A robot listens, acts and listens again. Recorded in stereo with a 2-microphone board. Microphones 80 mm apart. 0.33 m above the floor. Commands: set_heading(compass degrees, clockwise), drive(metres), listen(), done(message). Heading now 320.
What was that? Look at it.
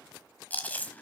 set_heading(300)
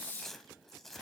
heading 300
done("Found it: chewing, straight ahead, 1 to 2 m away.")